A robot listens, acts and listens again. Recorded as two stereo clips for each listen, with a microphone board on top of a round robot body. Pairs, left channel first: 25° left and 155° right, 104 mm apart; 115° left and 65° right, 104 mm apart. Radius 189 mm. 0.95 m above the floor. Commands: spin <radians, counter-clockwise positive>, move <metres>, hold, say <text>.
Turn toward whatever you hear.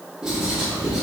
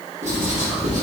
spin -1.31
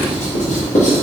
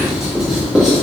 spin 0.35
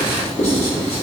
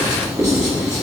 say Found it: writing, straight ahead.